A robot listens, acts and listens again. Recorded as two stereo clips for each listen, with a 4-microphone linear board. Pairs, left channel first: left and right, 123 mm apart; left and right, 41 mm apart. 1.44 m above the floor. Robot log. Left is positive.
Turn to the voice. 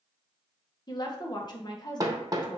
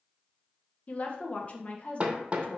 note: The woman speaking: about 35° left or 145° left.
cmd yaw +35
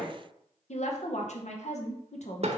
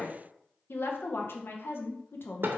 note: So it is at 110° left.
cmd yaw +110
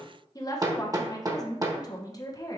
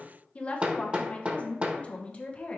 note: The woman speaking is now 30° left.
cmd yaw +30
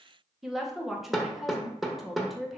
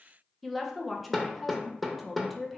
end: Facing the woman speaking, 1 to 2 m away.